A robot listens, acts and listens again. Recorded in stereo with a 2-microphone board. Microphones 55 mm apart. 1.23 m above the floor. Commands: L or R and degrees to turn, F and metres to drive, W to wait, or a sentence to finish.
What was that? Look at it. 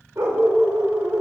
R55
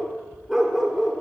Found it: a dog barking, straight ahead, 1 to 2 m away.